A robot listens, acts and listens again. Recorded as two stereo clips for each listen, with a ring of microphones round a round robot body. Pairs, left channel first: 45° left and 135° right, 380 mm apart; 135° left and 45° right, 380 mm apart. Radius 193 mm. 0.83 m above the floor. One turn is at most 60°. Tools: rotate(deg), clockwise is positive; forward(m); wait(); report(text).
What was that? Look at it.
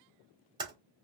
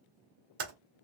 rotate(55)
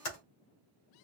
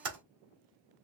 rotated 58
report("Facing the typing on a keyboard.")